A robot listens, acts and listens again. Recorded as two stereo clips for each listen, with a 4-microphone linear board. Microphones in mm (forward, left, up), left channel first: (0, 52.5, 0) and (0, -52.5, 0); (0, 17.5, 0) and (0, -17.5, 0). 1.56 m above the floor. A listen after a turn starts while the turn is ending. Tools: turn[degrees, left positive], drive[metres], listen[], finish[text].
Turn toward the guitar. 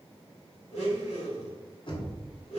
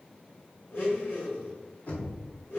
Action: listen[]
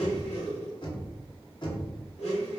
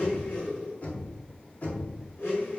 Action: listen[]
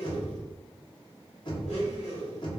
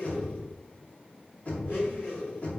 Action: finish[I can't make out a guitar, only knocking and a blender.]